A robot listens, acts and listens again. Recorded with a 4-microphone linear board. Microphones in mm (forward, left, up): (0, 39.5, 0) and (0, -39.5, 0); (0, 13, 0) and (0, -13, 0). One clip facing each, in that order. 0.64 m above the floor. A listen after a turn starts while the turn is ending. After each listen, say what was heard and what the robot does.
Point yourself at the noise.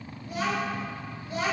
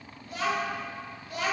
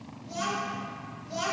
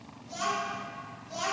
The child speaking: about 25° left or 155° left. Turn 25° left.
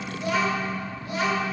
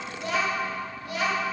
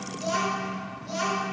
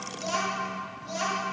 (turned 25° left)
The child speaking: about 25° left or 155° left. Turn 25° left.
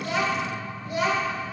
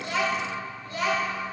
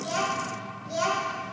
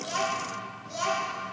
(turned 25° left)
The child speaking: about 20° left or 160° left. Turn 20° left.
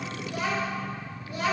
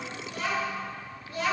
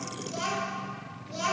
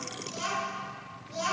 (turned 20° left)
The child speaking: about 20° left or 160° left. Turn 20° left.
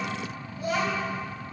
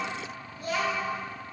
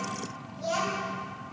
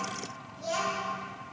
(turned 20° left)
Found it: a child speaking, straight ahead.